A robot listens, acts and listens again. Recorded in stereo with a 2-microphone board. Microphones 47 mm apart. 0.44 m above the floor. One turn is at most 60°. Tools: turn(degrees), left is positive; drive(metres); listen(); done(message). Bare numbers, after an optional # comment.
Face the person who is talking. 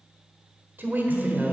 # The woman speaking: about 35° right or 145° right.
turn(-35)
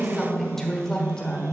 # So it is at 20° left.
turn(20)
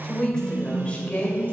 # The woman speaking is now 35° left.
turn(35)
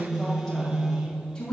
# The woman speaking is now 15° left.
turn(15)
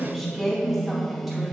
done("Found it: a woman speaking, straight ahead.")